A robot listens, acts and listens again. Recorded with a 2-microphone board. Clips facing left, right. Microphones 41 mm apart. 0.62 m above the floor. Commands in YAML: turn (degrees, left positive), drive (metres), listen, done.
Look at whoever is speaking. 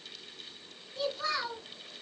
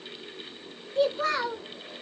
turn: -50
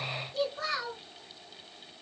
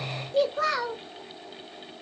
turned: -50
turn: -80
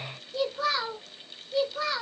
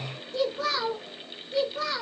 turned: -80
done: "Found it: a child speaking, straight ahead."